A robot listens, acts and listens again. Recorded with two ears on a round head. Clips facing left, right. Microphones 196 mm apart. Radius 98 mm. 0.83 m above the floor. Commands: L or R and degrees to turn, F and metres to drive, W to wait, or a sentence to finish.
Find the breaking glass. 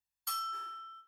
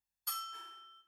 W
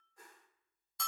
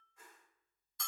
W
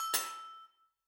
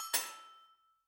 L25
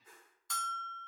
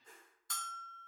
W
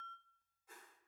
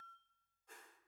I heard breaking glass, but can't make it out now. It was about straight ahead or 130° left.